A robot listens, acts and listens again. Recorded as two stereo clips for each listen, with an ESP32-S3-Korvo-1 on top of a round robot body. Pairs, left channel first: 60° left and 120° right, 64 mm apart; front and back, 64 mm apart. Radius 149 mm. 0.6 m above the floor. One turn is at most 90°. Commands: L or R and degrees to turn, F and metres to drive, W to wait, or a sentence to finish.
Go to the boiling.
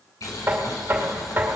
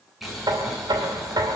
L90
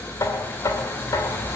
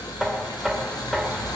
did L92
F1.0
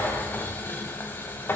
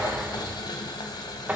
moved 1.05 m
F1.0
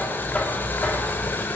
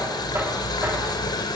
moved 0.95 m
F1.0
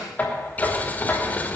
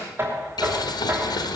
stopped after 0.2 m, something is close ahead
Arrived at the boiling, straight ahead.